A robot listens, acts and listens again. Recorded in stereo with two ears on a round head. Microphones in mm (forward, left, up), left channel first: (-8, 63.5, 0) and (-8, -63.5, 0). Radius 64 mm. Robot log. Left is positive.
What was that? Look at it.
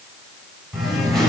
cmd yaw +30
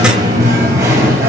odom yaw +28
note: So it is at 20° right.
cmd yaw -20
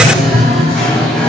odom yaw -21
end: Facing the singing, over 4 m away.